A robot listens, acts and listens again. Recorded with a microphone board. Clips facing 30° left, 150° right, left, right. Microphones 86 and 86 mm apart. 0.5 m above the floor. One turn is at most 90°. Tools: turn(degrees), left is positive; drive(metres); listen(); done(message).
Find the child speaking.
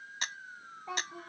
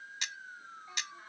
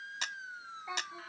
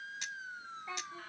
turn(degrees=20)
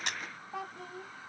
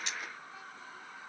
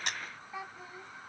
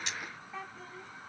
turn(degrees=10)
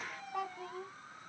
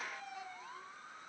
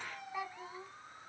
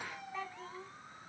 turn(degrees=15)
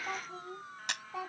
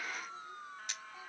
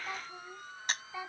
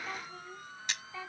turn(degrees=15)
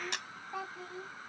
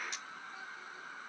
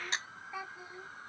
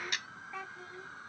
turn(degrees=15)
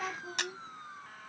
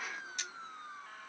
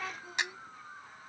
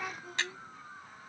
done("Found it: a child speaking, straight ahead.")